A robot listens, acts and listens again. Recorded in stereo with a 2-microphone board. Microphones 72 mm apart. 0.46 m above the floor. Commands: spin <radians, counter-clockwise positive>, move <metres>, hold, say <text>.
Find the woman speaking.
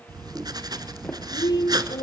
spin 1.13
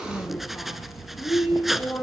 say Facing the woman speaking, over 4 m away.